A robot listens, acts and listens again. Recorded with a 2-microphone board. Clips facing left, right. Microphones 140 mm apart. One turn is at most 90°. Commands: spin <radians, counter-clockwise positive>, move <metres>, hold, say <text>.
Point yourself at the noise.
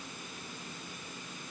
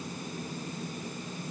hold
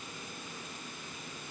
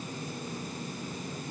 hold
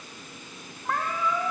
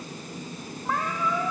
spin -0.52
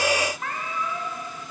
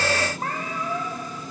spin -1.57
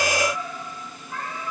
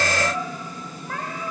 spin -1.31
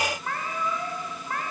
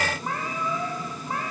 spin -0.26
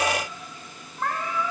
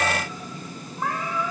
say Facing the cat meowing, over 4 m away.